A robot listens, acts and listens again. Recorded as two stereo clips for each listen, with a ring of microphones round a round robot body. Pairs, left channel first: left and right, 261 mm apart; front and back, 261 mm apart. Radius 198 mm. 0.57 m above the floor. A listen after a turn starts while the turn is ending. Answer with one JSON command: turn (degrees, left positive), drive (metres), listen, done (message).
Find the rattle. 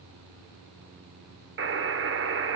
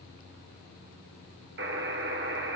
{"listen": true}
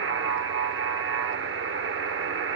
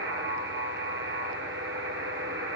{"listen": true}
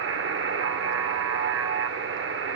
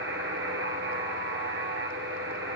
{"done": "I can't make out a rattle, only a buzzer."}